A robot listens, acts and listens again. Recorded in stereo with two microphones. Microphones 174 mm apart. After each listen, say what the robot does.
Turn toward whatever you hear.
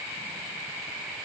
Keep listening.
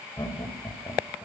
Turn 25° left.
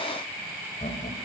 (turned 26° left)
Turn 130° left.
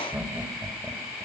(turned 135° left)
Found it: laughter, straight ahead, 2 to 4 m away.